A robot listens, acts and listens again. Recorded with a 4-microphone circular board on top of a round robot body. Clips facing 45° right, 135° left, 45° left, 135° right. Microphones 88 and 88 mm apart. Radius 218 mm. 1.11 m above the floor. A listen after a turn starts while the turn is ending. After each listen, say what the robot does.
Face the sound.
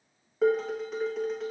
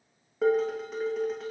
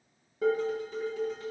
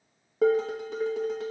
Turn 135° right.
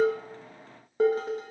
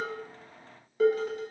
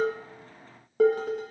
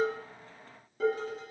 Turn 15° left.
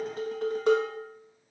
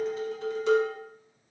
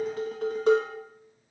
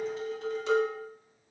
Facing the dishes clattering.